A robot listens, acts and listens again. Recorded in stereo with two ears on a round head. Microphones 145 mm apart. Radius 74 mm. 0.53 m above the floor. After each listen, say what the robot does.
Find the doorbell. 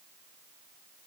Keep listening.
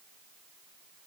Keep listening.
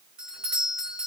Turn 30° right.
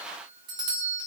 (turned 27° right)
Turn 150° right.
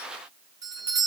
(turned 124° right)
Turn 25° right.
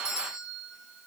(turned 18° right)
Facing the doorbell, 2 to 4 m away.